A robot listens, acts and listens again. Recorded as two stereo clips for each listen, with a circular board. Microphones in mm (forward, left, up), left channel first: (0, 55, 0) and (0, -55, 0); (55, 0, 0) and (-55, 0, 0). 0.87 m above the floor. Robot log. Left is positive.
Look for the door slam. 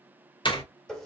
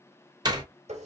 note: The door slam: 130° left.
cmd yaw +130
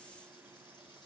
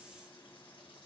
end: I heard a door slam from this way, but can't make it out now.